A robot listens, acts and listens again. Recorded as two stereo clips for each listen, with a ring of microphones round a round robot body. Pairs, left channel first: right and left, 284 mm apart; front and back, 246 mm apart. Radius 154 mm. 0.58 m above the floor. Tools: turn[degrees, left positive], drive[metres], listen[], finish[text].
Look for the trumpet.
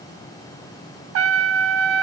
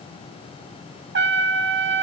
Thought: The trumpet: 135° left.
Action: turn[135]
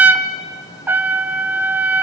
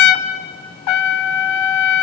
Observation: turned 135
Action: finish[Facing the trumpet.]